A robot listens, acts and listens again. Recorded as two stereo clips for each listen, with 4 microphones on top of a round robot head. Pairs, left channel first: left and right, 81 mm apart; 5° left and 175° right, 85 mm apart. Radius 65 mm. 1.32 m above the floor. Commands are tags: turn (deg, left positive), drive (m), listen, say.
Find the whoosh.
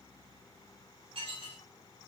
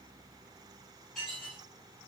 <listen/>
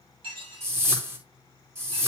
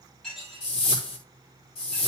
<turn deg="-30"/>
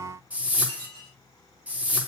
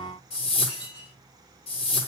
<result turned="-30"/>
<turn deg="-15"/>
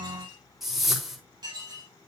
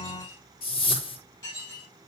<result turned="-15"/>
<say>Found it: a whoosh, straight ahead, over 4 m away.</say>